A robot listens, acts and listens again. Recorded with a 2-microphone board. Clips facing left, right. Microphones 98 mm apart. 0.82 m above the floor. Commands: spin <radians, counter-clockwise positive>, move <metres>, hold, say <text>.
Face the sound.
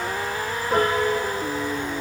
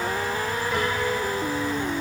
spin 0.70
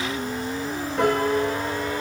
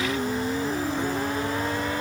spin 1.66
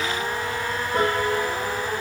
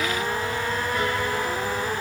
spin 0.70
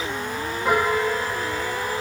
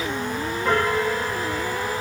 spin 0.17
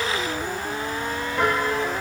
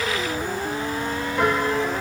say Facing the piano.